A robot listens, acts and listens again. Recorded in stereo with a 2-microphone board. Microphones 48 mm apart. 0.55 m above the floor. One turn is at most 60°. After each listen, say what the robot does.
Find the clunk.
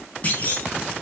Turn 30° left.
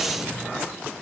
Keep listening.
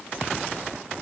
I heard a clunk, but can't make it out now. It was about straight ahead or 120° left.